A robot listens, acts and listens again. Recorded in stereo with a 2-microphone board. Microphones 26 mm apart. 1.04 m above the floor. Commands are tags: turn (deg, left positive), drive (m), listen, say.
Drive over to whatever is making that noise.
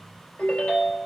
<turn deg="90"/>
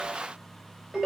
<turn deg="-15"/>
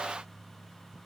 <listen/>
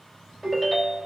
<drive m="1.0"/>
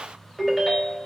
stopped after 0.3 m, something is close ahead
<say>Blocked. The ringtone is further on, straight ahead.</say>